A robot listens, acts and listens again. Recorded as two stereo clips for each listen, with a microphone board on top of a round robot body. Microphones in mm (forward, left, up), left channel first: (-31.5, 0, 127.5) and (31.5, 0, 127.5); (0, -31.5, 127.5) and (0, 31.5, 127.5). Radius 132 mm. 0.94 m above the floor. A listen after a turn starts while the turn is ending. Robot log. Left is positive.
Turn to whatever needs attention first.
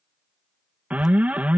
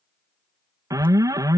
note: The alarm: 65° left.
cmd yaw +65
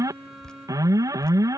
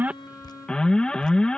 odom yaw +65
note: The alarm is now 15° right.
cmd yaw -15
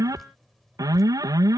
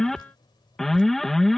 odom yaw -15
end: Facing the alarm.